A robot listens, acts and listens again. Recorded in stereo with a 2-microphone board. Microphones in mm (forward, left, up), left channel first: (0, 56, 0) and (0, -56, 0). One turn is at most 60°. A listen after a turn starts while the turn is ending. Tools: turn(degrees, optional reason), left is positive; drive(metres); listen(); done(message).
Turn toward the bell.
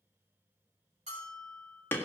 turn(degrees=-60, reason="The bell: about 70° right or 110° right.")
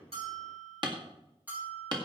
turn(degrees=-15, reason="So it is at 15° right.")
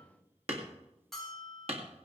done("Found it: a bell, straight ahead.")